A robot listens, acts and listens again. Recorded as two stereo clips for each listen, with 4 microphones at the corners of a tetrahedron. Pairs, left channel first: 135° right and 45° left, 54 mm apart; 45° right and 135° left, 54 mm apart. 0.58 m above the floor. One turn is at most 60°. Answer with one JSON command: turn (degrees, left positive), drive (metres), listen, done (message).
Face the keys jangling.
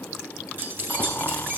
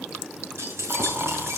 {"turn": 60}
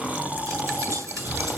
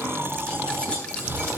{"turn": 25}
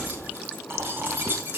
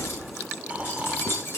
{"done": "Facing the keys jangling, over 4 m away."}